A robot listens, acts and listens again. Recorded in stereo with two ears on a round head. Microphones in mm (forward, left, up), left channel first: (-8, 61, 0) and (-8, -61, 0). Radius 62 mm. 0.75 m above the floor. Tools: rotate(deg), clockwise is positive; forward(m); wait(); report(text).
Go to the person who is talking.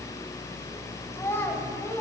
rotate(-20)
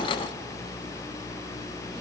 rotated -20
wait()
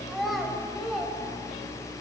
forward(1.0)
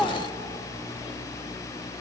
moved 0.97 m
forward(1.0)
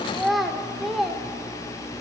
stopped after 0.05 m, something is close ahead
report("I am next to the child speaking.")